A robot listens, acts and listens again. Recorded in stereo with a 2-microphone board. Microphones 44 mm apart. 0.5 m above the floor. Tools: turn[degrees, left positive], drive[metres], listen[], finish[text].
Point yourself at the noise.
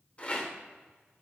Thought: The rattle: about 30° left or 150° left.
Action: turn[30]
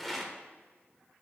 Action: finish[Facing the rattle.]